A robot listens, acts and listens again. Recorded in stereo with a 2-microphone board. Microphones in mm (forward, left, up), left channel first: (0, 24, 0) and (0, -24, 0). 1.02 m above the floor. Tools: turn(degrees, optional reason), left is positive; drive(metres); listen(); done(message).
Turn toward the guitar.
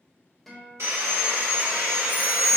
turn(degrees=30)
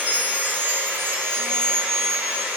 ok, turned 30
listen()
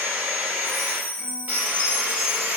listen()
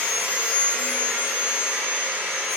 done("I heard a guitar, but can't make it out now. It was about 25° right or 145° left.")